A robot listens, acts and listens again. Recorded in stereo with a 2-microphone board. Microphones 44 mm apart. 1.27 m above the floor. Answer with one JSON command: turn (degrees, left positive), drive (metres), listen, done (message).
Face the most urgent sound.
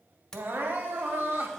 {"turn": -55}
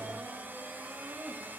{"turn": -65}
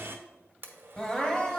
{"turn": 20}
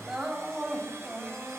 {"done": "Found it: crying, straight ahead."}